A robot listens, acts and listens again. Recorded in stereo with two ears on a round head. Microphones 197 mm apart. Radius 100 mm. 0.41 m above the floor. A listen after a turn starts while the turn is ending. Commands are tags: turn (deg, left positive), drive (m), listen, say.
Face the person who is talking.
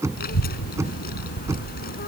<turn deg="45"/>
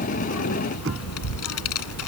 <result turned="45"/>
<turn deg="85"/>
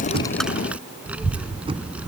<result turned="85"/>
<say>Found it: a child speaking, straight ahead.</say>